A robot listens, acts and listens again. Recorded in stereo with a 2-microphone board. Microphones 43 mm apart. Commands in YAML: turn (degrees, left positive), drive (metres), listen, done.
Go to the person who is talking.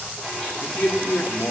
turn: 40
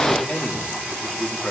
drive: 1.0
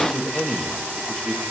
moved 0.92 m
drive: 1.0
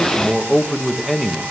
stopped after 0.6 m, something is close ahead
done: "I am next to the man speaking."